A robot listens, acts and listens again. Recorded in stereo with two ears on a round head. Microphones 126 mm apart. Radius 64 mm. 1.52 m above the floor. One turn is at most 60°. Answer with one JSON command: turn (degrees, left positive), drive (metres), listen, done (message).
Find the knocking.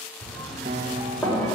{"turn": 30}
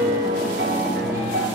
{"listen": true}
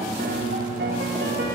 {"listen": true}
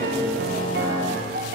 {"done": "I heard knocking, but can't make it out now. It was about 20° right or 140° left."}